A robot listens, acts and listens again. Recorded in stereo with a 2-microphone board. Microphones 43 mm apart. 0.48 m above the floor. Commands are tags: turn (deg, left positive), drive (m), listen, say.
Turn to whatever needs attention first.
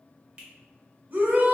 <turn deg="-45"/>
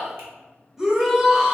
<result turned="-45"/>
<turn deg="-15"/>
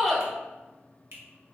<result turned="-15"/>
<say>Facing the shout, 1 to 2 m away.</say>